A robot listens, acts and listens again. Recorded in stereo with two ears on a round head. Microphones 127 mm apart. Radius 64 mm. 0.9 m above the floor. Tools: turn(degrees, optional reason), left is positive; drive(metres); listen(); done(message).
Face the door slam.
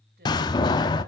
turn(degrees=30, reason="The door slam: about 30° left or 150° left.")
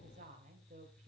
listen()
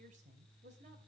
done("I heard a door slam, but can't make it out now. It was about straight ahead or 120° left.")